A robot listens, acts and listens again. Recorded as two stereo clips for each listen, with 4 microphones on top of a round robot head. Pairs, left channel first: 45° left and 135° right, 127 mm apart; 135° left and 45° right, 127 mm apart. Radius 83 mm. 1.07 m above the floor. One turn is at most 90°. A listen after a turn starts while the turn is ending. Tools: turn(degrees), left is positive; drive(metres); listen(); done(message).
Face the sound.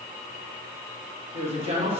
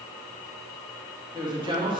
turn(degrees=-90)
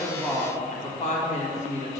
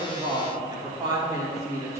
turn(degrees=25)
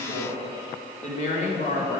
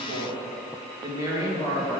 turn(degrees=25)
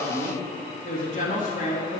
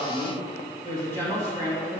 turn(degrees=20)
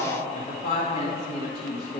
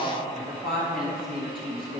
done("Facing the woman speaking, 1 to 2 m away.")